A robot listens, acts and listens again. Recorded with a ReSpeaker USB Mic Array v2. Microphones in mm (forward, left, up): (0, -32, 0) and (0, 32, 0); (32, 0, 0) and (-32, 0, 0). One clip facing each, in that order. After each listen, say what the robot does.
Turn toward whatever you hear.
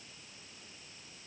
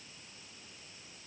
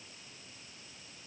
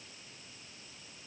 Keep listening.
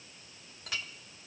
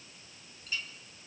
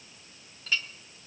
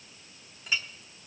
Turn 105° right.
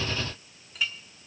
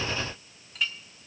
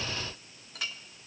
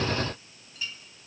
Found it: a clink, straight ahead, 1 to 2 m away.